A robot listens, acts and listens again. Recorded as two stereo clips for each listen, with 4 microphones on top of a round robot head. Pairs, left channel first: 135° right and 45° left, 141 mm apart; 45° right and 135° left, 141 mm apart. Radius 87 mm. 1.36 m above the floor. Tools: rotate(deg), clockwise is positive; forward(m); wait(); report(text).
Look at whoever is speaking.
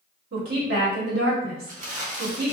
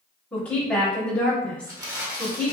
rotate(-35)
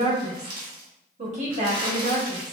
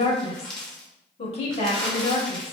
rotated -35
report("Facing the woman speaking.")